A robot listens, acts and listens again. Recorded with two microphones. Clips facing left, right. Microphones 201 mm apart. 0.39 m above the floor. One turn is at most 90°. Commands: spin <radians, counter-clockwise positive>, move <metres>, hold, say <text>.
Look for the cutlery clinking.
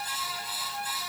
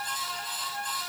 hold
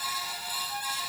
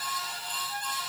hold
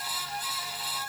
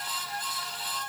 say I can't make out cutlery clinking to turn to.